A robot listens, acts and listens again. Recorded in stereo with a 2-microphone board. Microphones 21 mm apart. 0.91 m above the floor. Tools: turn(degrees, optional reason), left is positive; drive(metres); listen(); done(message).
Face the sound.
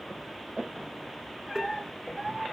listen()
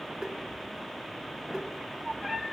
listen()
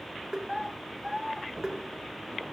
turn(degrees=-30, reason="The tapping: about 30° right or 150° right.")
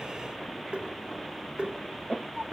turn(degrees=-120, reason="So it is at 120° right.")
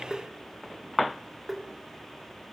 done("Found it: tapping, straight ahead, 2 to 4 m away.")